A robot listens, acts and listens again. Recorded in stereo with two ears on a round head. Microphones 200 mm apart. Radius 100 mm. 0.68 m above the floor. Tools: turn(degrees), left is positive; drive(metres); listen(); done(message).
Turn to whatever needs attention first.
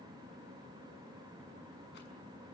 listen()
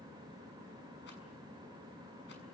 listen()
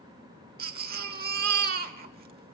turn(degrees=-45)
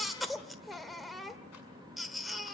done("Found it: a baby crying, straight ahead.")